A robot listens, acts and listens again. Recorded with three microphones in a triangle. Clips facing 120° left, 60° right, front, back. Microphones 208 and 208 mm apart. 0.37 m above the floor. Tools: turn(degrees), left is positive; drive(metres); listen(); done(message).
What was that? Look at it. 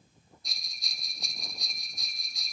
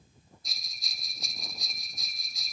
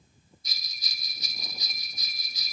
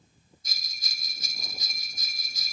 turn(degrees=-150)
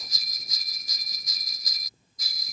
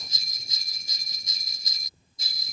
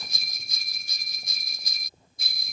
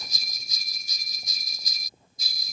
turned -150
done("Facing the bell.")